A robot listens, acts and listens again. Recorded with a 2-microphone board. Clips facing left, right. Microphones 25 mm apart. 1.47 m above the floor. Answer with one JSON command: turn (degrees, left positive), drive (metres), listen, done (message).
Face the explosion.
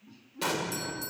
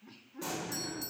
{"turn": 65}
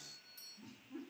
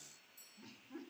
{"listen": true}
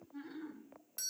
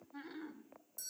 {"done": "I heard an explosion, but can't make it out now. It was about straight ahead or 50° left."}